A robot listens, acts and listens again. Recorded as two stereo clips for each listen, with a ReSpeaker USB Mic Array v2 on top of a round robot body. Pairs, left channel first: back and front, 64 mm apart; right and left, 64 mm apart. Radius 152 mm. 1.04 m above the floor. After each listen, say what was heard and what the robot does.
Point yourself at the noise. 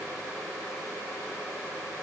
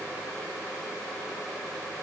Keep listening.
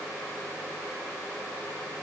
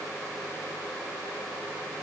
Keep listening.
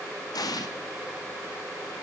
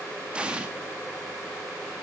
The explosion: 165° left. Turn 165° left.
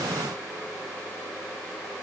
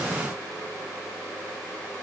I heard an explosion from this way, but can't make it out now.